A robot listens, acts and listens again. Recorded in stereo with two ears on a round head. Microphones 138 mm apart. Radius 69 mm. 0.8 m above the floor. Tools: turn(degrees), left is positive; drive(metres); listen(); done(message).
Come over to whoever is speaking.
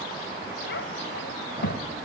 turn(degrees=90)
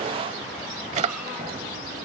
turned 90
listen()
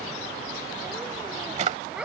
drive(metres=1.0)
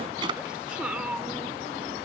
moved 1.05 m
turn(degrees=-10)
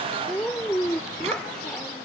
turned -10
drive(metres=1.0)
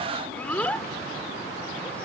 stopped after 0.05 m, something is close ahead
turn(degrees=10)
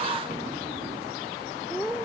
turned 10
done("I am next to the child speaking.")